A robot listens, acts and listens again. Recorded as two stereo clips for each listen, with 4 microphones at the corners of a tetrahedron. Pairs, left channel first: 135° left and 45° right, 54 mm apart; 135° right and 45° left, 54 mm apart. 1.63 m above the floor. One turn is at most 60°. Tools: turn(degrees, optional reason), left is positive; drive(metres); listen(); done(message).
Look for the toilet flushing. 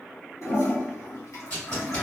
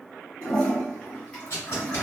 turn(degrees=60, reason="The toilet flushing: 155° left.")
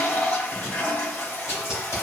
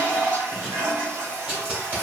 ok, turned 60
turn(degrees=60, reason="The toilet flushing is now 75° left.")
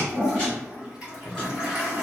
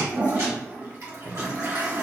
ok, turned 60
turn(degrees=30, reason="The toilet flushing is now 30° left.")
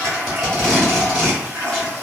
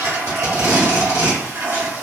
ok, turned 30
turn(degrees=10, reason="The toilet flushing is now 10° left.")
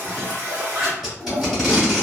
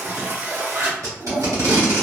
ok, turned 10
done("Facing the toilet flushing.")